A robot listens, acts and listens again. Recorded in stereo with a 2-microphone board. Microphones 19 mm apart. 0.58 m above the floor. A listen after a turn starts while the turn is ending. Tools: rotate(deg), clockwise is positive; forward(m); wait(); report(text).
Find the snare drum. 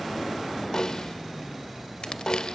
rotate(-45)
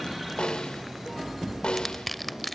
rotate(-85)
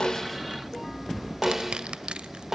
rotate(20)
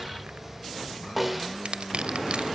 rotate(10)
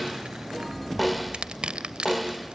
report("Facing the snare drum, 2 to 4 m away.")